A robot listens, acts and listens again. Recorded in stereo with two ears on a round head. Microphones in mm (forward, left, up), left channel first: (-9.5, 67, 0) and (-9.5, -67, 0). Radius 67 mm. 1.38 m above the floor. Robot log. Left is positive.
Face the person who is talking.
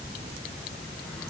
cmd idle
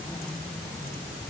cmd idle
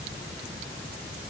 end: I can't make out anyone speaking to turn to.